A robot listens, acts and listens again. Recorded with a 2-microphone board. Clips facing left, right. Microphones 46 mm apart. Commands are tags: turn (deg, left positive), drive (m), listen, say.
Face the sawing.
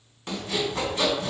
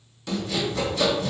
<turn deg="35"/>
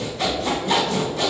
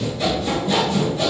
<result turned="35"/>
<turn deg="110"/>
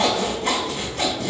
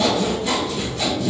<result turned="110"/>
<turn deg="55"/>
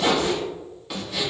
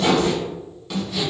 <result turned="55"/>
<say>Found it: sawing, straight ahead, 1 to 2 m away.</say>